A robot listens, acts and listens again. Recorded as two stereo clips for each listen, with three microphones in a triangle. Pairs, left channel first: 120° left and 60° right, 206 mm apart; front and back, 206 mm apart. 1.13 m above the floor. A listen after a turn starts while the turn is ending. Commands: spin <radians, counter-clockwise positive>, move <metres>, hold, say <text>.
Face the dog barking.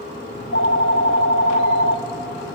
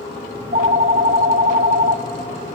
hold
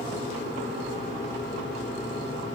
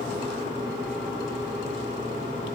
hold
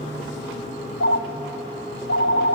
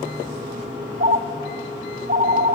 say I can't make out a dog barking, only a phone ringing.